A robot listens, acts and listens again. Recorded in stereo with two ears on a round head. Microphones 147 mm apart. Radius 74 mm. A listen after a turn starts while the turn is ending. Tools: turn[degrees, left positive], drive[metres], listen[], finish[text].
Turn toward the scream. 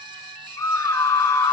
Thought: The scream: about 20° left or 160° left.
Action: turn[20]
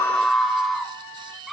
Action: finish[Facing the scream, 1 to 2 m away.]